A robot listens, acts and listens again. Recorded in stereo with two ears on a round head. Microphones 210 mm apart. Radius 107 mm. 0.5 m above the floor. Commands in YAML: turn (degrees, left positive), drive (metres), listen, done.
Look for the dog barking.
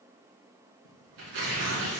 listen: true
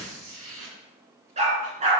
turn: -30
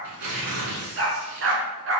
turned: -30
turn: -120
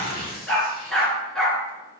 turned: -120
done: "Facing the dog barking."